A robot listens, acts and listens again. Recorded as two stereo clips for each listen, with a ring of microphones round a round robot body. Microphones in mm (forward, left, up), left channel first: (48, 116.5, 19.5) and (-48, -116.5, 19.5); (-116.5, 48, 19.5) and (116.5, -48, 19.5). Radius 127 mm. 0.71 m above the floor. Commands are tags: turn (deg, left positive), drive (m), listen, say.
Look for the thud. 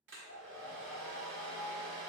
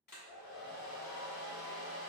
<listen/>
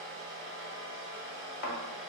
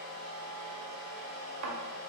<turn deg="20"/>
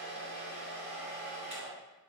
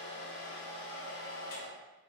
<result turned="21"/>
<say>Facing where the thud came from. I can't hear it now.</say>